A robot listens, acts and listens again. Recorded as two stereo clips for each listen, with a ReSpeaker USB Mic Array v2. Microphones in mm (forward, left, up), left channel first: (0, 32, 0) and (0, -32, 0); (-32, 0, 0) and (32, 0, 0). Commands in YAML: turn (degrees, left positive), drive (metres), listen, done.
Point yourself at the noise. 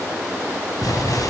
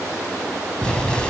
turn: 105
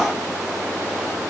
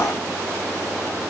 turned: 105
done: "Facing where the explosion came from. I can't hear it now."